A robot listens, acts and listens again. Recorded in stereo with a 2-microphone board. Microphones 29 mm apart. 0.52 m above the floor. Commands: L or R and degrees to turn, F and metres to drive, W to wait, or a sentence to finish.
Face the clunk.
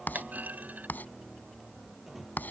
R70
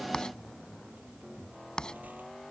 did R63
W
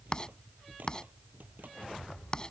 I heard a clunk, but can't make it out now. It was about 5° right or 45° right.